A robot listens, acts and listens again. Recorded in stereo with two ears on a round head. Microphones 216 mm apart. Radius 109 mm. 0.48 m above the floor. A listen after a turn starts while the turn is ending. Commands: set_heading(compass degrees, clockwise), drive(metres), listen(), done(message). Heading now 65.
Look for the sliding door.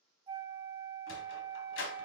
set_heading(10)
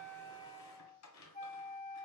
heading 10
set_heading(300)
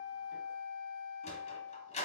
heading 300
set_heading(270)
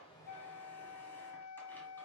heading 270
listen()
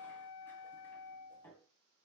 set_heading(260)
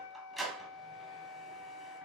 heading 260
done("Found it: a sliding door, straight ahead, 1 to 2 m away.")